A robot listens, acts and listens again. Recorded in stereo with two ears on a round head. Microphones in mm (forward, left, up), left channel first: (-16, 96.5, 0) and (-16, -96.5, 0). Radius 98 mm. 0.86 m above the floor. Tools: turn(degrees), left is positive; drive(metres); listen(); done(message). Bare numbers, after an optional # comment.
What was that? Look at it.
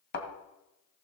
# The thud: about 50° left or 130° left.
turn(50)
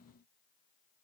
listen()
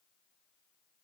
done("I heard a thud, but can't make it out now. It was about straight ahead or 80° left.")